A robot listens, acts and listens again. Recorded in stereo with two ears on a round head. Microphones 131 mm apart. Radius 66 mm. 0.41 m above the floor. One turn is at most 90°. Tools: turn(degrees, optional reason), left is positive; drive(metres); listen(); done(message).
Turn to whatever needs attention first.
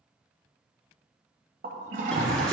turn(degrees=30)
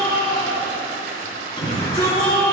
turn(degrees=90, reason="So it is at 145° left.")
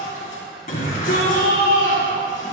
turn(degrees=60, reason="The shout is now 60° left.")
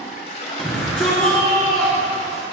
done("Facing the shout.")